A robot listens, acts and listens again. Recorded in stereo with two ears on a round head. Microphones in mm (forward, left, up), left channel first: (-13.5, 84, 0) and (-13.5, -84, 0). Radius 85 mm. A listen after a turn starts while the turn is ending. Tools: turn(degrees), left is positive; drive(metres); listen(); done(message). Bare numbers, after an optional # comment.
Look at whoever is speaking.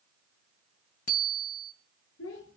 turn(90)
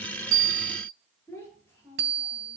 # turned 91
# So it is at 10° left.
turn(10)
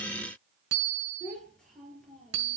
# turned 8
done("Facing the child speaking, over 4 m away.")